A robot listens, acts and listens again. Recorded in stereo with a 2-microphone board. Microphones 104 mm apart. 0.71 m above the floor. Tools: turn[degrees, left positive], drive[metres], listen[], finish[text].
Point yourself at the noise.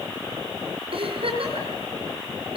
Thought: The giggle: about 60° right or 120° right.
Action: turn[-60]
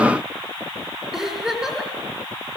Action: finish[Facing the giggle, over 4 m away.]